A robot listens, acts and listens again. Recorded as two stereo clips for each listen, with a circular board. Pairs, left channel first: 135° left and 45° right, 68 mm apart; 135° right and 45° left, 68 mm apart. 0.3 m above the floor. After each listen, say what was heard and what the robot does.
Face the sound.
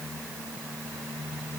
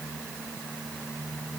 Keep listening.
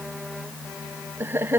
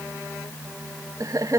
The laughter: 10° left. Turn 10° left.
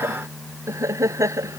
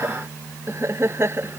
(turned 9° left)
Found it: laughter, straight ahead.